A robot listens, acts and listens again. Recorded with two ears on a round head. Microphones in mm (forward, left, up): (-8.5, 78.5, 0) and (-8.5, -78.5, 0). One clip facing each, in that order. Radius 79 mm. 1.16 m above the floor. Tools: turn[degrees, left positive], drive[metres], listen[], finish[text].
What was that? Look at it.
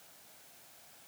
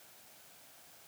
Action: listen[]
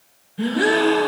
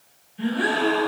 Thought: The gasp: about 70° left or 110° left.
Action: turn[70]
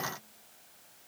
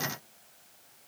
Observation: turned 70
Action: listen[]
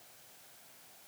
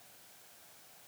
Action: finish[I heard a gasp, but can't make it out now. It was about straight ahead or 40° left.]